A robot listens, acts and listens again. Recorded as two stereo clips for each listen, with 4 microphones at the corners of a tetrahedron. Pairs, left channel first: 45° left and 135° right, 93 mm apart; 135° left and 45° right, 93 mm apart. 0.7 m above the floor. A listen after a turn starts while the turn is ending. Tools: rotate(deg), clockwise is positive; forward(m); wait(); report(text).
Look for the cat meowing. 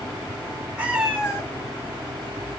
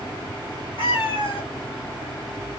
rotate(-145)
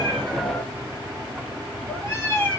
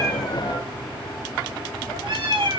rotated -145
rotate(20)
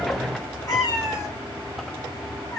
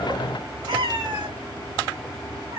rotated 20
rotate(10)
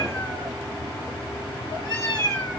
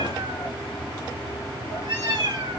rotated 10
report("Found it: a cat meowing, straight ahead, 2 to 4 m away.")